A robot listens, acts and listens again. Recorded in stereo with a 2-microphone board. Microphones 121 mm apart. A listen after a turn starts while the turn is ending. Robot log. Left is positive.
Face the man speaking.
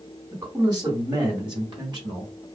note: The man speaking: about 40° right or 140° right.
cmd yaw -40
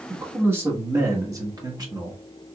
note: The man speaking: about 35° right or 145° right.
cmd yaw -35
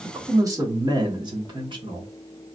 note: The man speaking: about 45° right or 135° right.
cmd yaw -45
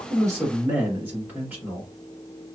note: So it is at 15° right.
cmd yaw -15
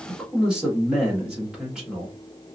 end: Found it: a man speaking, straight ahead, 1 to 2 m away.